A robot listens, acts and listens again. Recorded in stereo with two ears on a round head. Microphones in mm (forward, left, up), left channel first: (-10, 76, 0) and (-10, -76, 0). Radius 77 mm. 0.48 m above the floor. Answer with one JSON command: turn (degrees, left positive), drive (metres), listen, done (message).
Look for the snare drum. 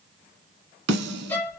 {"turn": -65}
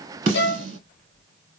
{"turn": -40}
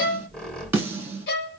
{"turn": -15}
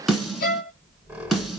{"done": "Found it: a snare drum, straight ahead."}